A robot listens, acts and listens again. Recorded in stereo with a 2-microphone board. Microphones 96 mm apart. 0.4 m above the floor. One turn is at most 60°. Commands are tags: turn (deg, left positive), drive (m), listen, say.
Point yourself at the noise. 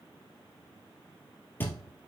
<turn deg="20"/>
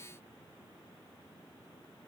<listen/>
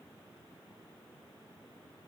<say>I heard a thud, but can't make it out now. It was about straight ahead or 140° left.</say>